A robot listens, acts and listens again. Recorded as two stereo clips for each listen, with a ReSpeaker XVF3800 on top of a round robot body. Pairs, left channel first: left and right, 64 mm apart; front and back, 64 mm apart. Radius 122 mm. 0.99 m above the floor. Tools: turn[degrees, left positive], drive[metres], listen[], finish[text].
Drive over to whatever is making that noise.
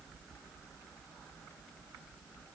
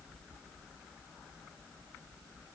Action: listen[]
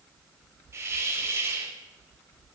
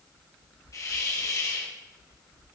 Thought: The hiss: 40° right.
Action: turn[-40]
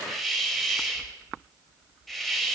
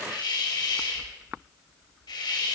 Action: drive[1.0]
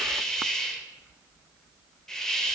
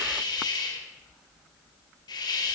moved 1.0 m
Thought: The hiss is now 10° left.
Action: turn[10]
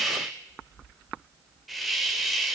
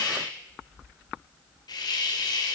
Action: drive[1.0]
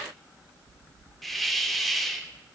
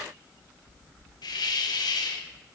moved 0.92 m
Action: drive[1.0]
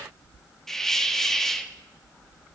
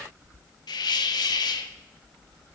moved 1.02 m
Action: drive[1.0]
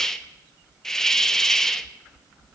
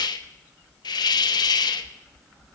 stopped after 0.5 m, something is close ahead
Action: finish[Arrived at the hiss, straight ahead.]